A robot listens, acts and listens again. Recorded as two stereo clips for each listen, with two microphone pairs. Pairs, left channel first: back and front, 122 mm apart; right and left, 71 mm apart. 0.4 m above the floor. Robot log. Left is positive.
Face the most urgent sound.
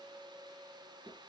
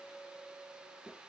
cmd idle
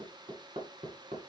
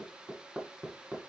cmd idle
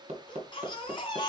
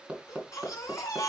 note: The baby crying: 130° right.
cmd yaw -130
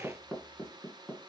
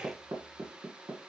cmd idle
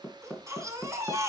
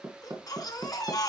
note: The baby crying is now 65° right.
cmd yaw -65
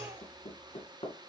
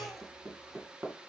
cmd idle
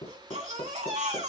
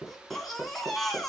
end: Found it: a baby crying, straight ahead, 2 to 4 m away.